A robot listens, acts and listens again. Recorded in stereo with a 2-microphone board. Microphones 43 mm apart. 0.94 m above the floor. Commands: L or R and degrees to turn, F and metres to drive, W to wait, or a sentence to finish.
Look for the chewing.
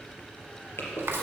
L65
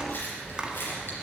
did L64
L50
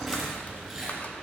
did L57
Found it: chewing, straight ahead.